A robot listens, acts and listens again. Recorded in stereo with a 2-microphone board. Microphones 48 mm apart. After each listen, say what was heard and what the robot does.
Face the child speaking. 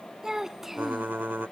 Turn 30° right.
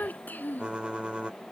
So it is at 40° left. Turn 40° left.
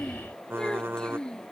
The child speaking is now 15° left. Turn 15° left.
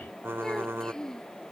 The child speaking is now 10° left. Turn 10° left.
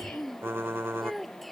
Facing the child speaking.